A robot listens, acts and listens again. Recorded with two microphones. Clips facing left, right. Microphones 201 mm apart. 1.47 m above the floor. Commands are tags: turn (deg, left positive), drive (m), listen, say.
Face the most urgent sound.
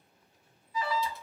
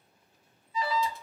<turn deg="-25"/>
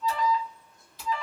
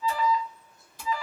<say>Facing the alarm, 1 to 2 m away.</say>